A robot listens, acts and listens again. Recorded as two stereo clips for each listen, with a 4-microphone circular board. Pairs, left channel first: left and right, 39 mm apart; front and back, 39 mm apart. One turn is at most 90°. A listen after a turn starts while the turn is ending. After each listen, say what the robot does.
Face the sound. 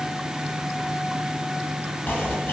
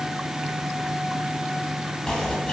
Turn 75° left.
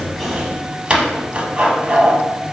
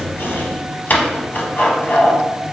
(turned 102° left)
Turn 25° right.
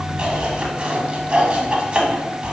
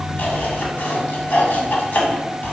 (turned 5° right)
Turn 20° right.
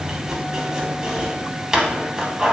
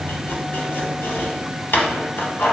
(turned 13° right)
Turn 10° right.
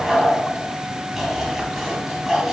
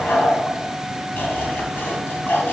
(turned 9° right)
Facing the chopping, under 1 m away.